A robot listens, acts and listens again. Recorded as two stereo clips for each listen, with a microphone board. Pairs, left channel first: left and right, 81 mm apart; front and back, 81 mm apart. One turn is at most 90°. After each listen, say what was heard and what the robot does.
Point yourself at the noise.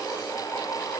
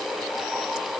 Keep listening.
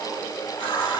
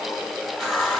The running tap: 85° left. Turn 85° left.
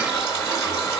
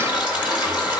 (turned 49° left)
The running tap is now 35° left. Turn 35° left.
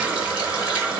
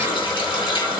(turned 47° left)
The running tap is now 10° right. Turn 10° right.
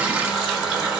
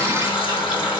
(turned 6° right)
Facing the running tap, 2 to 4 m away.